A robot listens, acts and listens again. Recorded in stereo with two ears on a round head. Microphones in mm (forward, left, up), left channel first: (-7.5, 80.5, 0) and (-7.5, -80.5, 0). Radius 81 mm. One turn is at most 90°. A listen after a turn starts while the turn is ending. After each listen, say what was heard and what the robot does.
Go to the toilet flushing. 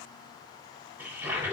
Turn 30° right.
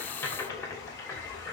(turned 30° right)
So it is at 15° left. Turn 15° left.
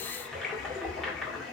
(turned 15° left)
Drive 1.0 m forward.
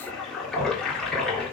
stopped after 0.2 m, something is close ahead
Something is in my way. I am facing the toilet flushing but have not reached it.